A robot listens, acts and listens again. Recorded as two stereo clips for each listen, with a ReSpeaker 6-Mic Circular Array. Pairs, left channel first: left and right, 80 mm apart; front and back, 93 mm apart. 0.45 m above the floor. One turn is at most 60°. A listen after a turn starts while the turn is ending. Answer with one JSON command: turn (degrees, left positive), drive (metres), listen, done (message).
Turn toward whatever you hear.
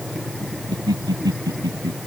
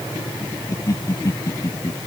{"turn": -55}
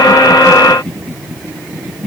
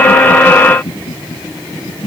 {"done": "Facing the laughter."}